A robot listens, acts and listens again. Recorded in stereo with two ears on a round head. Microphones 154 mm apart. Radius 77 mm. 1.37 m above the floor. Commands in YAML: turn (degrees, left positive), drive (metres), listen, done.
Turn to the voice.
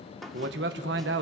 turn: -70
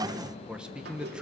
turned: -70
done: "Facing the man speaking, 1 to 2 m away."